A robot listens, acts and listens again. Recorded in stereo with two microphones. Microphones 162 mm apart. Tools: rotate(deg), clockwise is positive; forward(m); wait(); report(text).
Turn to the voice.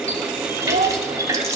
rotate(50)
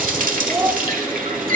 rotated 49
rotate(15)
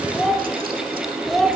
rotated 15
report("Found it: a child speaking, straight ahead, under 1 m away.")